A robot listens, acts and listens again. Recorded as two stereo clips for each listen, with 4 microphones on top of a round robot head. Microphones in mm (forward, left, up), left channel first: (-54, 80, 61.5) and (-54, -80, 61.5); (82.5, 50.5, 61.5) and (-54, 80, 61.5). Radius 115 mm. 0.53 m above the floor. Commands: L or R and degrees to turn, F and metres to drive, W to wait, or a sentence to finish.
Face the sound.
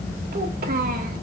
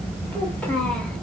R95
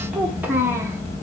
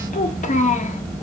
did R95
R15
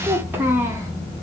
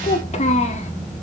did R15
R20
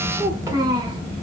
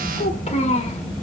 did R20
R30
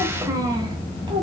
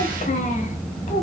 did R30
R35
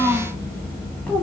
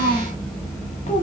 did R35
Found it: a child speaking, straight ahead.